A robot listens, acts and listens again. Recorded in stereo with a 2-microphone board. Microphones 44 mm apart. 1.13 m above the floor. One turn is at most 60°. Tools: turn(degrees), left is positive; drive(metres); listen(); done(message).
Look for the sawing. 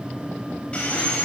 turn(degrees=25)
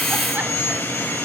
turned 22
turn(degrees=60)
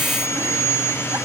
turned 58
turn(degrees=60)
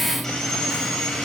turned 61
turn(degrees=10)
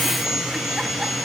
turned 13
done("Facing the sawing.")